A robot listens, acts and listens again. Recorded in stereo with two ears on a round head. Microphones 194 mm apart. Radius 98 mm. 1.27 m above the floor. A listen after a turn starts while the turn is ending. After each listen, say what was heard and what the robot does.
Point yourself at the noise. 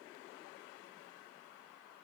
Keep listening.
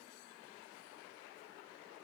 Keep listening.
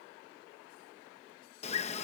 The bird: about 30° left or 150° left. Turn 30° left.
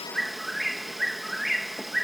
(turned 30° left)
Facing the bird.